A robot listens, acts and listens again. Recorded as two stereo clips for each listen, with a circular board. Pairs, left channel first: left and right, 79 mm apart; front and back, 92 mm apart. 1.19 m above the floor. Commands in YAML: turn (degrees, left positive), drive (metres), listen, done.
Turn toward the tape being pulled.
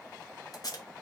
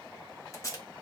turn: 50
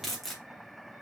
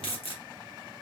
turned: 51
done: "Found it: tape being pulled, straight ahead, 1 to 2 m away."